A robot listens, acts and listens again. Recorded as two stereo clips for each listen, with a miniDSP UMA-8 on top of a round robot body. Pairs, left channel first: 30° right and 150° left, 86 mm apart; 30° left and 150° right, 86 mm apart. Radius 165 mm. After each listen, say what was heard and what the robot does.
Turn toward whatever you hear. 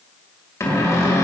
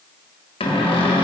The cupboard door: 25° left. Turn 25° left.
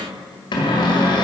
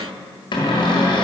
Found it: a cupboard door, straight ahead, 1 to 2 m away.